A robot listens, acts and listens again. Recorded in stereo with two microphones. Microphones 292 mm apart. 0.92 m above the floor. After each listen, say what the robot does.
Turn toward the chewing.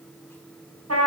Keep listening.
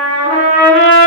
Keep listening.
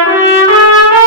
I can't make out chewing to turn to.